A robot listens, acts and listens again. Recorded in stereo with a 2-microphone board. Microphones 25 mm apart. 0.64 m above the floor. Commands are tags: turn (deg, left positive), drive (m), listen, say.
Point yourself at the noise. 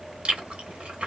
<turn deg="-55"/>
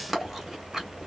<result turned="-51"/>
<turn deg="-15"/>
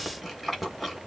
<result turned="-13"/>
<say>Found it: chewing, straight ahead.</say>